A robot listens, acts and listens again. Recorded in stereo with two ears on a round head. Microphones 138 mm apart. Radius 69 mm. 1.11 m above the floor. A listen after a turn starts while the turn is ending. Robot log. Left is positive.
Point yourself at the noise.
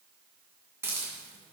note: The hiss: about 20° right or 160° right.
cmd yaw -20
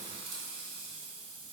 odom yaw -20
note: So it is at 140° right.
cmd yaw -140
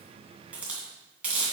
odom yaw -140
note: The hiss is now 10° right.
cmd yaw -10
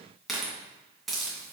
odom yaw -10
end: Facing the hiss, 2 to 4 m away.